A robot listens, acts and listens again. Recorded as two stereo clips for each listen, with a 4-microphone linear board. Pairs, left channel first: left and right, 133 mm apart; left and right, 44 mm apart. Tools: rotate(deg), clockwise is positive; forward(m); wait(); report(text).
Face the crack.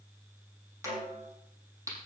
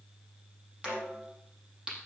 rotate(20)
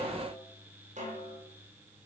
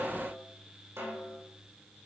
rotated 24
wait()
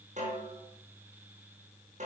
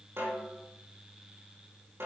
report("I heard a crack, but can't make it out now. It was about straight ahead or 135° right.")